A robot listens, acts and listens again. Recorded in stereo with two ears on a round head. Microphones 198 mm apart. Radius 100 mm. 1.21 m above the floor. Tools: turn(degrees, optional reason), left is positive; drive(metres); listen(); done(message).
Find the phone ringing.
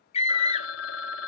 turn(degrees=65, reason="The phone ringing: about 65° left or 115° left.")
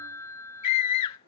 turn(degrees=15, reason="So it is at 15° left.")
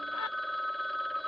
done("Facing the phone ringing.")